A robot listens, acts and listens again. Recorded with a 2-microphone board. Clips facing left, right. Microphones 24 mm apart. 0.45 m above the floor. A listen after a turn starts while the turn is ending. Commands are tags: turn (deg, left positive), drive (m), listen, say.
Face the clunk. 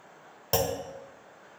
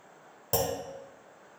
<turn deg="45"/>
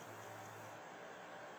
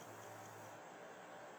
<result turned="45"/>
<listen/>
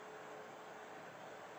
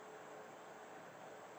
<say>I heard a clunk, but can't make it out now. It was about straight ahead or 90° left.</say>